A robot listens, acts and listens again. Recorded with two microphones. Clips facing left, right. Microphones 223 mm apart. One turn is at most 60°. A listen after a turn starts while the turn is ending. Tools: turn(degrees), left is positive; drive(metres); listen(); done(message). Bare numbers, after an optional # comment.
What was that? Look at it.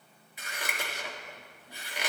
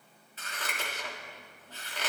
turn(30)
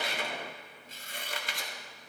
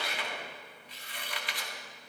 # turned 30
# So it is at 135° left.
turn(60)
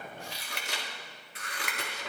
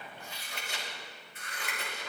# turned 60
# The scissors is now 85° left.
turn(60)
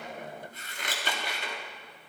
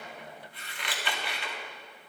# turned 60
# The scissors is now 45° left.
turn(45)
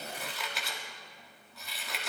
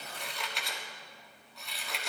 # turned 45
done("Found it: scissors, straight ahead, 1 to 2 m away.")